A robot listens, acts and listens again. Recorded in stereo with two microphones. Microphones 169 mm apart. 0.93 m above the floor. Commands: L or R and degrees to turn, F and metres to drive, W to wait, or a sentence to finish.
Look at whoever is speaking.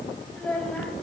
L30
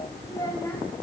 L160
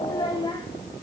L30
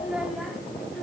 Facing the child speaking, 2 to 4 m away.